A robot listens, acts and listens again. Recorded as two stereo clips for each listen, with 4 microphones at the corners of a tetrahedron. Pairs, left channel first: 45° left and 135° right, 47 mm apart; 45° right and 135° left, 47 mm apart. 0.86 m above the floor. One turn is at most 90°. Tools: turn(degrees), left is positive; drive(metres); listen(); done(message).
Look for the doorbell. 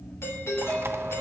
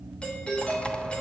turn(degrees=20)
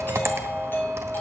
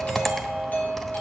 done("Found it: a doorbell, straight ahead, 2 to 4 m away.")